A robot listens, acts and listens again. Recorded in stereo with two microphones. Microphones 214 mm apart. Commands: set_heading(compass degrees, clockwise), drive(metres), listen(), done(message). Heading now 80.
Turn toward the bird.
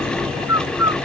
set_heading(350)
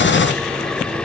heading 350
listen()
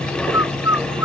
set_heading(5)
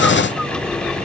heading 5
listen()
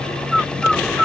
done("Found it: a bird, straight ahead.")